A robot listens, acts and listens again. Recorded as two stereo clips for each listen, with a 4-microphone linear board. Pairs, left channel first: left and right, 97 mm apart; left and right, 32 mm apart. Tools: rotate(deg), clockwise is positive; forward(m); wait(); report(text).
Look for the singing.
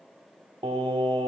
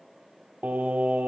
rotate(90)
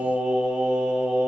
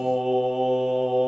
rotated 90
rotate(15)
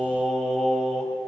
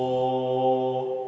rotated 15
report("Found it: singing, straight ahead.")